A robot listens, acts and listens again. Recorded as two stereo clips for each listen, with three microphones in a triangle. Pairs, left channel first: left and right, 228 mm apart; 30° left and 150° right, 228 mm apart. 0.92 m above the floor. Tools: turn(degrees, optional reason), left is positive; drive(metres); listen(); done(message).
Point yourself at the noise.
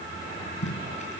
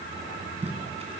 turn(degrees=150, reason="The tape being pulled: 150° left.")
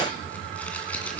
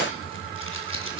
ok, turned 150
done("Found it: tape being pulled, straight ahead.")